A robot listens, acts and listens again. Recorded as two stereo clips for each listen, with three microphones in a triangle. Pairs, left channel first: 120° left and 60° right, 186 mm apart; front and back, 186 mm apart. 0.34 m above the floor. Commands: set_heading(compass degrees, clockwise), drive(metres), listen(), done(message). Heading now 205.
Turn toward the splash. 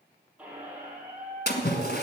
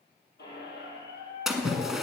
set_heading(115)
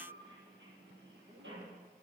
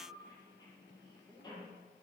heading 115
done("Facing where the splash came from. I can't hear it now.")